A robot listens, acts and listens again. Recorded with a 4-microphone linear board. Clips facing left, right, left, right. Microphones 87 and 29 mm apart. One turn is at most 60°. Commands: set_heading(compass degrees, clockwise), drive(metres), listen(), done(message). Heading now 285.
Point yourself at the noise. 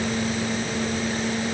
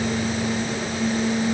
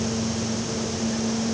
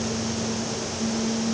listen()
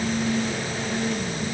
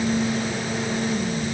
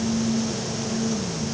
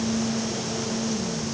listen()
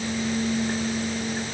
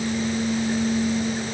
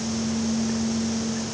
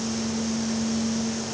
done("I can't make out anything to turn to.")